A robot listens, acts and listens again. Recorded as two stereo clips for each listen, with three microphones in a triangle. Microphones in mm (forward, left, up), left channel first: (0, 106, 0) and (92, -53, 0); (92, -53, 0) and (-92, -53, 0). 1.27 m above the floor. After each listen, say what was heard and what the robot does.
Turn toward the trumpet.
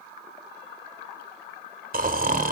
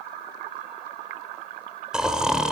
Keep listening.
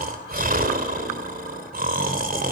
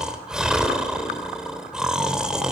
Keep listening.
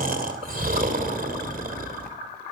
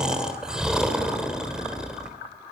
I can't make out a trumpet to turn to.